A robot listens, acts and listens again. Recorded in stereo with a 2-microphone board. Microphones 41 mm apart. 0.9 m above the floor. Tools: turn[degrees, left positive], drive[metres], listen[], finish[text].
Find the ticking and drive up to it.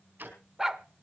Thought: The ticking: about 55° right or 125° right.
Action: turn[-55]
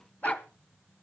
Action: listen[]
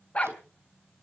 Action: listen[]
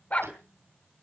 Action: finish[I heard ticking, but can't make it out now. It was about straight ahead or 70° right. I did not reach it.]